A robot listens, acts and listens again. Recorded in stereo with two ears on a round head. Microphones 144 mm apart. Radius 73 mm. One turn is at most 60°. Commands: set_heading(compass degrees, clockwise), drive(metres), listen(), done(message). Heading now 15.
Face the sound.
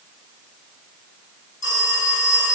set_heading(320)
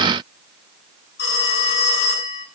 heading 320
set_heading(260)
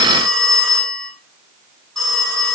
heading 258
done("Facing the phone ringing, over 4 m away.")